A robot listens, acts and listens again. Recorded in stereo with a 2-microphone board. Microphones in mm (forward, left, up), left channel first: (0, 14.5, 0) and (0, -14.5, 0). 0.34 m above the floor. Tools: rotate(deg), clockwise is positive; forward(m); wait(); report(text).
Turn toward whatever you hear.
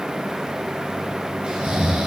rotate(35)
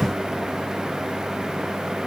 wait()
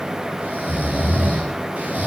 rotate(105)
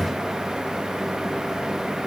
wait()
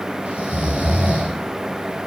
rotate(45)
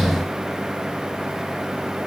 wait()
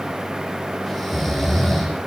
report("Facing the snoring, over 4 m away.")